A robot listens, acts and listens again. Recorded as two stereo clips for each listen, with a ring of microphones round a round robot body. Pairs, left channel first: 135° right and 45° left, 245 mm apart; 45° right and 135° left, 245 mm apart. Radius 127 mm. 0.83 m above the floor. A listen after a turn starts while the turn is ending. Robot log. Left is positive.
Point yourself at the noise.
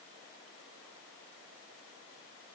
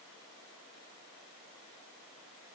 cmd idle
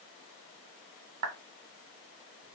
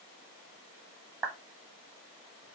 note: The clap: 60° left.
cmd yaw +60
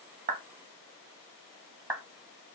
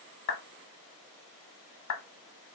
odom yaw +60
note: The clap is now 30° right.
cmd yaw -30
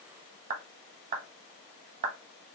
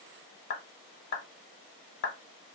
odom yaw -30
end: Found it: a clap, straight ahead.